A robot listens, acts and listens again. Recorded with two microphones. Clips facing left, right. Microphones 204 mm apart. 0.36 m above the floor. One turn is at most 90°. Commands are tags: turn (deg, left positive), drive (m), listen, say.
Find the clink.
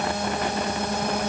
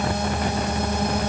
<listen/>
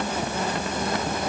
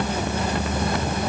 <listen/>
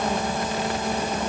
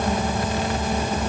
<say>I can't make out a clink.</say>